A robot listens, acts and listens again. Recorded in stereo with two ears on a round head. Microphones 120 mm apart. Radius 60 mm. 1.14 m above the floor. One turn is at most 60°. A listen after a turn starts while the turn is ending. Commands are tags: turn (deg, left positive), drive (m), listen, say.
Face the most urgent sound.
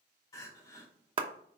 <turn deg="25"/>
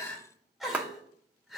<say>Found it: crying, straight ahead, 1 to 2 m away.</say>